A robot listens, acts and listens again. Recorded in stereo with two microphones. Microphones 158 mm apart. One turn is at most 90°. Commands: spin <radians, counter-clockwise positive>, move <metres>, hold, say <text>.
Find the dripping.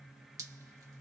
spin -0.35
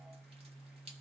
spin -1.57
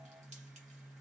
spin -0.87
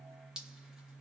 say Found it: dripping, straight ahead.